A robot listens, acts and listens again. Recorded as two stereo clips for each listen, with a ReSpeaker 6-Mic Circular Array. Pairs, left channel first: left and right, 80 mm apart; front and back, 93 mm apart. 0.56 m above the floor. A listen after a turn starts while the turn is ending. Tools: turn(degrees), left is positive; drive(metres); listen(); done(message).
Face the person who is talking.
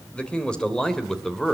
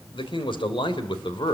done("Facing the man speaking, 2 to 4 m away.")